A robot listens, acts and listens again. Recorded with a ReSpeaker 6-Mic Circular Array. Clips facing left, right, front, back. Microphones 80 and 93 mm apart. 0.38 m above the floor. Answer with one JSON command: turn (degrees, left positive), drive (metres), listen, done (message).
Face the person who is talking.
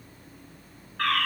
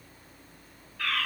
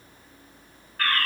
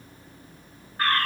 {"listen": true}
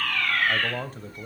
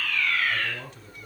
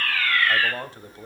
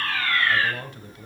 {"turn": 50}
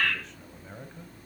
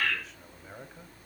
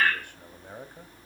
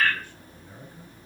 {"done": "Facing the man speaking."}